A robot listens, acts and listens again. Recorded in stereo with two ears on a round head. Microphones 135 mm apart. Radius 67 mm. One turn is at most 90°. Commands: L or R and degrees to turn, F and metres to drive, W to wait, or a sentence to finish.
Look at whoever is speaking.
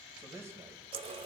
R20
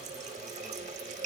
W
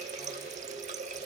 W
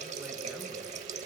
I heard a man speaking, but can't make it out now. It was about straight ahead or 140° right.